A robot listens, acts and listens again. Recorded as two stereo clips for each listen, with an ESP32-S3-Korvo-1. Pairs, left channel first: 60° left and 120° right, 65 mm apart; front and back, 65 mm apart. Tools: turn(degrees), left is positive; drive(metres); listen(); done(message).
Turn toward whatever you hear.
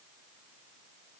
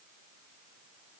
listen()
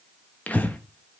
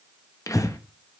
done("Facing the breathing.")